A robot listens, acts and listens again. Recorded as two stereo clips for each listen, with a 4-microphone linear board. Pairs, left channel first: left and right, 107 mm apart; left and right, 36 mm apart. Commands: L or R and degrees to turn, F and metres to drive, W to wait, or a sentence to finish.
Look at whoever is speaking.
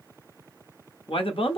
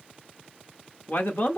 L55
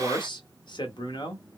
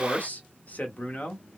L55
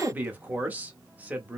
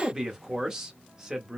R15
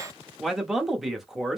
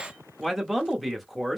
Found it: a man speaking, straight ahead, under 1 m away.